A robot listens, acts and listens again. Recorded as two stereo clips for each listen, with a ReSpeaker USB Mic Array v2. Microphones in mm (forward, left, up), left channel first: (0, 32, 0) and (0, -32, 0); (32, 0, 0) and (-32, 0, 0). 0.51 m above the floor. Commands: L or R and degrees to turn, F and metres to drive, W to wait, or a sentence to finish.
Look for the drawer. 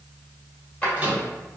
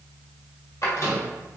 L25
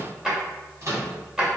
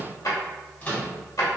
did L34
R10
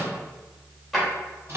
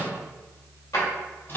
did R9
Found it: a drawer, straight ahead.